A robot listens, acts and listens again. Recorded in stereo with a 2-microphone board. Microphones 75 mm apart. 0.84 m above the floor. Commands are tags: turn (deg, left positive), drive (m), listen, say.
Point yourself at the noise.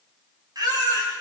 <turn deg="-55"/>
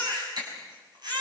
<turn deg="-65"/>
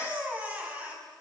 <turn deg="-20"/>
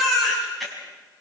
<say>Found it: a baby crying, straight ahead.</say>